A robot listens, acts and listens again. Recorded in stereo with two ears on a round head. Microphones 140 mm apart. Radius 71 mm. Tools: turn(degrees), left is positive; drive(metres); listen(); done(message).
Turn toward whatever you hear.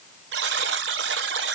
turn(degrees=-90)
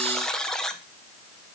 done("Found it: a buzzer, straight ahead.")